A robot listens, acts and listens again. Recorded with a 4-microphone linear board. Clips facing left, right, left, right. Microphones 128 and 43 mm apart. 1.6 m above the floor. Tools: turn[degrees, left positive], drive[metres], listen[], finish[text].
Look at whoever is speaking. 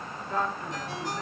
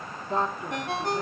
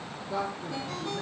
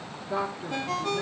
Thought: The woman speaking: about 25° right or 155° right.
Action: turn[-25]
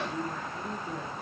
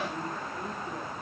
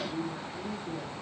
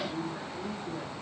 Action: finish[Found it: a woman speaking, straight ahead.]